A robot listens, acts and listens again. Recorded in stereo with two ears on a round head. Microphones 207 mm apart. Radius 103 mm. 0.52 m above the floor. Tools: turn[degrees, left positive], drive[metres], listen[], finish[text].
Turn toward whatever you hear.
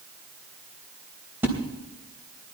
Action: turn[-30]
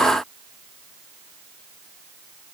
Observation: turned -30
Action: listen[]
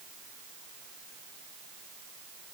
Action: finish[I heard a splash, but can't make it out now. It was about 20° left or 140° right.]